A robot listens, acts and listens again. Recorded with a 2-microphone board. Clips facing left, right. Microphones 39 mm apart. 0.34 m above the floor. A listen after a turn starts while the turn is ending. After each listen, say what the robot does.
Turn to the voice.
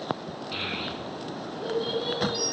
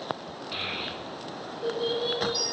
Turn 30° left.
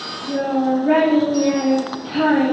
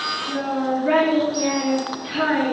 Turn 20° right.
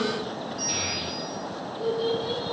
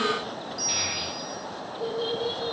Turn 10° right.
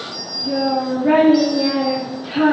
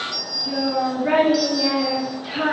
Facing the child speaking.